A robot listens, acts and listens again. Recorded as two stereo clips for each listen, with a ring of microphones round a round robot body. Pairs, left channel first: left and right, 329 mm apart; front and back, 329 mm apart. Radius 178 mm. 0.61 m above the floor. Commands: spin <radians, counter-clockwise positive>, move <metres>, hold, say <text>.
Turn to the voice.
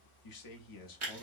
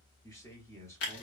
spin 1.40
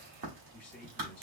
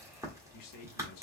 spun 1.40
say Facing the man speaking.